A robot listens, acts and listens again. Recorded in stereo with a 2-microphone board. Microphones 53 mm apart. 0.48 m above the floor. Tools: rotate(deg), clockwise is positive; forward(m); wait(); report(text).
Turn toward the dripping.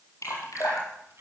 rotate(-70)
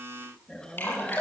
rotate(-40)
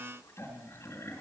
wait()
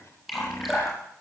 report("Found it: dripping, straight ahead.")